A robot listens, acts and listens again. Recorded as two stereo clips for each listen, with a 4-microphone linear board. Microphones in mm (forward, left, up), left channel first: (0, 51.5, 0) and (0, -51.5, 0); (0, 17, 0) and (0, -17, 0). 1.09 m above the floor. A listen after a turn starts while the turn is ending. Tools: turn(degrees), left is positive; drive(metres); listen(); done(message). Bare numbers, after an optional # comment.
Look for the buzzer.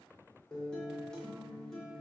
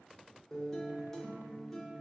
listen()
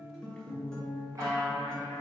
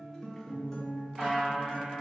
# The buzzer: about 35° right or 145° right.
turn(-35)
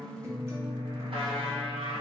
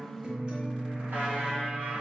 listen()
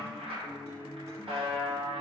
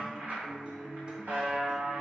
# So it is at 110° right.
turn(-110)
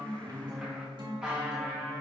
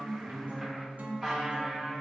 done("Facing the buzzer.")